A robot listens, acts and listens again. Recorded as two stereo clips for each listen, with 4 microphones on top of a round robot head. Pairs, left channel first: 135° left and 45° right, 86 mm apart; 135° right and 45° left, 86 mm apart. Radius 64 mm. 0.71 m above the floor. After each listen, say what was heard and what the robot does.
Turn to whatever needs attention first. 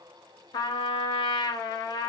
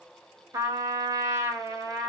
Keep listening.
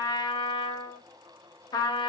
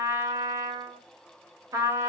Keep listening.
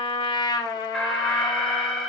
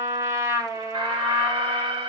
The alarm: 45° left. Turn 45° left.
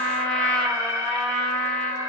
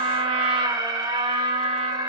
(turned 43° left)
Facing the alarm, 1 to 2 m away.